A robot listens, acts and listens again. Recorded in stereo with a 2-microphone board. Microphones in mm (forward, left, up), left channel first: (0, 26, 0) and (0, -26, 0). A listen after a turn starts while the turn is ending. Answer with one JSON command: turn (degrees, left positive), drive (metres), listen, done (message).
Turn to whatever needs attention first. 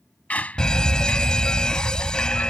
{"turn": 30}
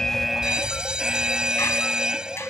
{"turn": -15}
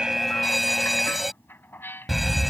{"done": "Found it: a fire alarm, straight ahead."}